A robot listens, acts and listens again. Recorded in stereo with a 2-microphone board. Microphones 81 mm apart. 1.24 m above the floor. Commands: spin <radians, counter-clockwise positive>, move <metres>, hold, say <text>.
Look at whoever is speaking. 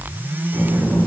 spin 0.79
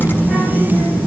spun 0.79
say Facing the child speaking.